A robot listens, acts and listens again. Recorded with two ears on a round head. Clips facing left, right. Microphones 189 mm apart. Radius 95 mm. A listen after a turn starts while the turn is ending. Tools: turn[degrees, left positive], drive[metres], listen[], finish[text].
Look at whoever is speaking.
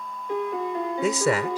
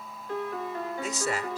Thought: The man speaking: about 60° left or 120° left.
Action: turn[60]
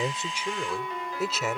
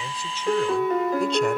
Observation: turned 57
Action: listen[]
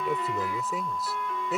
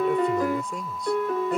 Action: finish[Found it: a man speaking, straight ahead.]